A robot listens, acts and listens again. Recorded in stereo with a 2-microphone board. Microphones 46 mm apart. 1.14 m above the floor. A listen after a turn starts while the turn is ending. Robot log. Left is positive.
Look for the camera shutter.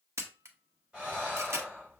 cmd yaw -90
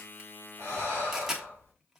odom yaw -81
note: So it is at 10° right.
cmd yaw -10
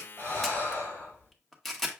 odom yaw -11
end: Facing the camera shutter, under 1 m away.